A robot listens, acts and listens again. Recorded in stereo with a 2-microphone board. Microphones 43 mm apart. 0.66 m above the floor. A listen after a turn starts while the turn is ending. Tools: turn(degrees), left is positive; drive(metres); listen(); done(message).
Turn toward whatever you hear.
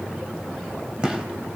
turn(degrees=-30)
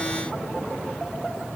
listen()
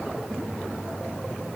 done("I heard a gunshot, but can't make it out now. It was about straight ahead or 120° right.")